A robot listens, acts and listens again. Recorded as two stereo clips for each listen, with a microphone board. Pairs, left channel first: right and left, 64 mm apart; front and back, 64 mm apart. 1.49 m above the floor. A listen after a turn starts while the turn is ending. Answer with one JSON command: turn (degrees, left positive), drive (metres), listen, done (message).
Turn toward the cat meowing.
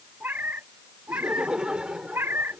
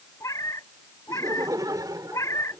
{"turn": 40}
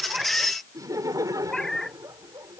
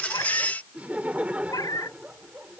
{"turn": -10}
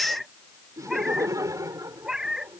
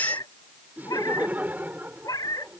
{"turn": 10}
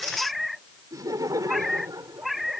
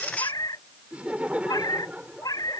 {"done": "Facing the cat meowing."}